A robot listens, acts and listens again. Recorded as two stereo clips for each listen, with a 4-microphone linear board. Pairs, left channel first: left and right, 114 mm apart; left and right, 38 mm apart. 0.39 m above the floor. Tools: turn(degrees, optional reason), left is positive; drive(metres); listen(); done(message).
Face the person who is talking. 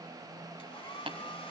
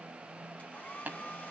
listen()
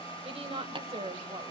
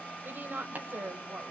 turn(degrees=-55, reason="The woman speaking: about 55° right or 125° right.")
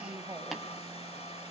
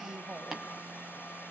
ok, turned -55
turn(degrees=-35, reason="So it is at 35° right.")
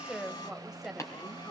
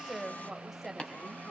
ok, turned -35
done("Facing the woman speaking, 1 to 2 m away.")